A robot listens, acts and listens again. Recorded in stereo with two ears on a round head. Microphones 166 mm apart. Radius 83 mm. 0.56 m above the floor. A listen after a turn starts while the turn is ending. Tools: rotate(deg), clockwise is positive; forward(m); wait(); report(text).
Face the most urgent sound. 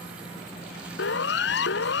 rotate(-65)
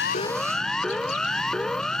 report("Found it: a siren, straight ahead.")